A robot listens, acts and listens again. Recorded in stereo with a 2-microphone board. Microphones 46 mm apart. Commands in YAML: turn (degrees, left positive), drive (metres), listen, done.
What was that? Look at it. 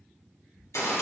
turn: 90
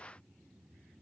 done: "Facing where the gunshot came from. I can't hear it now."